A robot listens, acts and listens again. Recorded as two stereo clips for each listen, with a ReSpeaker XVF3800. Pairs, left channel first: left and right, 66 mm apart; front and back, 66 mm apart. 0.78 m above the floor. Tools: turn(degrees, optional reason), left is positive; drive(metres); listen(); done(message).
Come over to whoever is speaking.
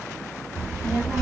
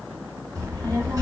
turn(degrees=-150, reason="The child speaking: 150° right.")
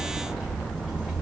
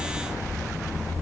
drive(metres=1.0)
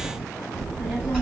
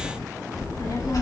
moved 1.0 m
turn(degrees=15, reason="The child speaking is now 15° left.")
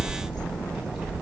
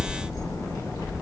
drive(metres=1.0)
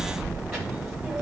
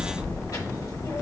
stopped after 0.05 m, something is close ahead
done("Arrived at the child speaking, straight ahead.")